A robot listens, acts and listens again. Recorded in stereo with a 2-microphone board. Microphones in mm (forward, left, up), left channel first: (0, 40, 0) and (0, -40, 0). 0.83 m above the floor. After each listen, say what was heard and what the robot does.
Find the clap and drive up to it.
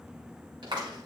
The clap: about 70° right or 110° right. Turn 70° right.
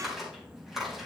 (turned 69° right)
Drive 1.0 m forward.
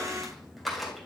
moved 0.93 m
Drive 1.0 m forward.
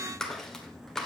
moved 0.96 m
Drive 1.0 m forward.
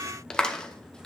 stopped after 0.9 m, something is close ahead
The clap is now 10° left. Turn 10° left.
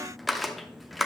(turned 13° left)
Arrived at the clap, straight ahead.